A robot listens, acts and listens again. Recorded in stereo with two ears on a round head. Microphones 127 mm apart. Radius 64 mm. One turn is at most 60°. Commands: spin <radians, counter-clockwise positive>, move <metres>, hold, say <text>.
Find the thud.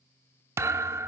spin -0.35
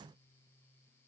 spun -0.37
hold
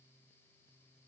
say I heard a thud, but can't make it out now. It was about straight ahead or 140° right.